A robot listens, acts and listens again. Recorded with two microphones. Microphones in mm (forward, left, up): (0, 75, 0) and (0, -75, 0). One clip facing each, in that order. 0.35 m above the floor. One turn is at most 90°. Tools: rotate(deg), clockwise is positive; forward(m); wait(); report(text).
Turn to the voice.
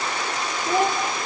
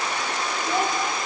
rotate(-60)
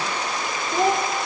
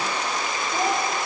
rotate(-60)
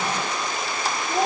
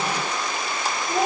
rotate(15)
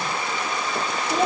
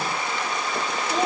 report("Found it: a child speaking, straight ahead.")